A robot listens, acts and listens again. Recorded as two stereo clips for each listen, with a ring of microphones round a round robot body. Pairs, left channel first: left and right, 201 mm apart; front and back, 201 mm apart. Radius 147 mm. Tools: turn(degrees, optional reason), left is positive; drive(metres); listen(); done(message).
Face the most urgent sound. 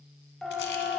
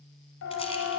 done("Found it: a siren, straight ahead.")